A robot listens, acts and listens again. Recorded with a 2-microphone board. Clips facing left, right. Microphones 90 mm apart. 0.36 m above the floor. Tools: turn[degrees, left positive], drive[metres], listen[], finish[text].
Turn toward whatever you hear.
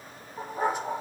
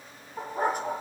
Thought: The dog barking: about 55° right or 125° right.
Action: turn[-55]
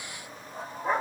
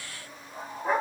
Action: finish[Facing the dog barking, over 4 m away.]